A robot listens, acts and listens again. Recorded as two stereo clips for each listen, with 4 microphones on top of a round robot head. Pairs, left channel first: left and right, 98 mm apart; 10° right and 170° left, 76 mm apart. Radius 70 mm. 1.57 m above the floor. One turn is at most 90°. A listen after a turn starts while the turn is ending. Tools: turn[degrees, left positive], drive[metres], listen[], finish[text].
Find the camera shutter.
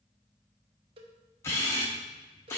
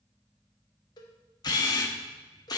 Thought: The camera shutter: 20° left.
Action: turn[20]
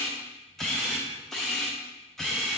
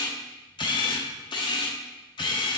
Action: finish[Found it: a camera shutter, straight ahead, 1 to 2 m away.]